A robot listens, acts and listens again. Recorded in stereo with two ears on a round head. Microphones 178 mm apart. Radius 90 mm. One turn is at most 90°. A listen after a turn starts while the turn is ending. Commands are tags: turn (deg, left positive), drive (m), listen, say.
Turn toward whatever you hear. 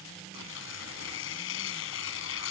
<turn deg="70"/>
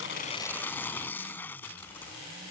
<turn deg="10"/>
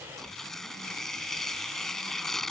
<say>Found it: tearing paper, straight ahead.</say>